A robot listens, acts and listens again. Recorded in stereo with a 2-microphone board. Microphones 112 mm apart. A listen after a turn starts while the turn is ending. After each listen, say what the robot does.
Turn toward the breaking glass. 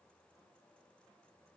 Keep listening.
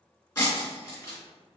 Turn 30° left.
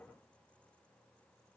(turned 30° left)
Keep listening.
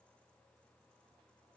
I heard breaking glass, but can't make it out now. It was about straight ahead or 120° left.